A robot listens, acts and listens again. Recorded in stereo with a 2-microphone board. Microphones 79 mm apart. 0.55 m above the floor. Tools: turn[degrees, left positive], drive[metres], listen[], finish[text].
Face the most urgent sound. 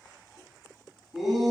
Action: turn[-30]
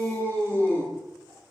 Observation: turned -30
Thought: So it is at 25° left.
Action: turn[25]
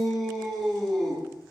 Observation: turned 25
Action: finish[Found it: a shout, straight ahead, over 4 m away.]